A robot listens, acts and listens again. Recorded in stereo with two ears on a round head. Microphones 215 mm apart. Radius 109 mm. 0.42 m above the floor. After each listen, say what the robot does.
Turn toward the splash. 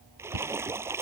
Turn 30° right.
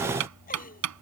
Keep listening.
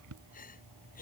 I heard a splash, but can't make it out now. It was about 20° left or 140° right.